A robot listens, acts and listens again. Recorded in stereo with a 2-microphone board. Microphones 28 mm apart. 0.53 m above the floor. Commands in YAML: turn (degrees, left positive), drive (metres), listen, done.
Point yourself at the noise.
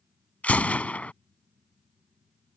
turn: 70
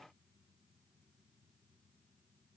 listen: true
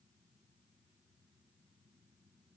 done: "I heard a gunshot, but can't make it out now. It was about straight ahead or 40° left."